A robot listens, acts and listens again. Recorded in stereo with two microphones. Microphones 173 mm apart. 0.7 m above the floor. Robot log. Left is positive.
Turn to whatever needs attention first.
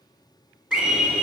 cmd yaw -30
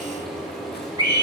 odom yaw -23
note: So it is at 150° right.
cmd yaw -150
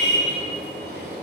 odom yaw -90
note: The scream is now 60° right.
cmd yaw -60
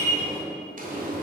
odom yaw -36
note: The scream is now 25° right.
cmd yaw -25
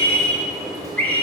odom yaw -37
note: The scream is now 10° left.
cmd yaw +10
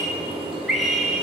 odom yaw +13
end: Facing the scream, 1 to 2 m away.